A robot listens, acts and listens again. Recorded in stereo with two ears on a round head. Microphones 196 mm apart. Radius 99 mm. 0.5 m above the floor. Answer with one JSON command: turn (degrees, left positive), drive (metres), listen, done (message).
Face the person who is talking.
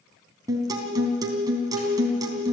{"listen": true}
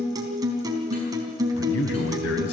{"turn": 70}
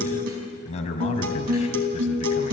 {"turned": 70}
{"turn": 30}
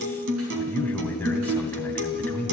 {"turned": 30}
{"turn": 10}
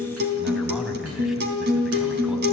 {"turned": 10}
{"done": "Found it: a man speaking, straight ahead, 2 to 4 m away."}